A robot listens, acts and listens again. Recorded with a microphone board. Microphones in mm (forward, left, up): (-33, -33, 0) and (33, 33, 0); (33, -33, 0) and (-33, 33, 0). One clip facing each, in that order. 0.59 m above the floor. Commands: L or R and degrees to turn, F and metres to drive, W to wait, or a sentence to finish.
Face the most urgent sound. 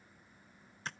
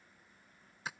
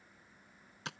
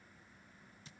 W
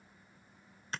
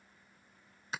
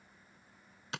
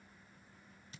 W
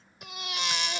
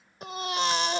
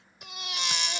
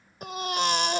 L95
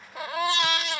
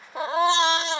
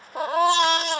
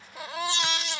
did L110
R15
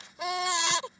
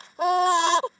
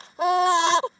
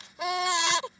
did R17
Facing the baby crying.